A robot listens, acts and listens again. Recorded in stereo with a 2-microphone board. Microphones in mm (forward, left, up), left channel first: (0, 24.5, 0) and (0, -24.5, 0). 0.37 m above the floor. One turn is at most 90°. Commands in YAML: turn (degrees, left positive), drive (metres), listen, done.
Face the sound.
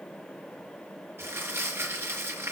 turn: -50
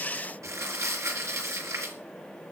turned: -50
turn: -75
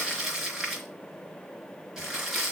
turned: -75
turn: -10
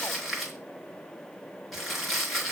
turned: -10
done: "Facing the crumpling, 2 to 4 m away."